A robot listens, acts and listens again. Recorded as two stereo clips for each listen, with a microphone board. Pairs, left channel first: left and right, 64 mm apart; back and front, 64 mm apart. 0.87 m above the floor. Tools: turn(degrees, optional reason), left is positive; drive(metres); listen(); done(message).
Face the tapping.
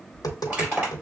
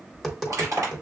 turn(degrees=95, reason="The tapping: 95° left.")
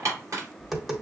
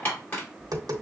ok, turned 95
done("Found it: tapping, straight ahead.")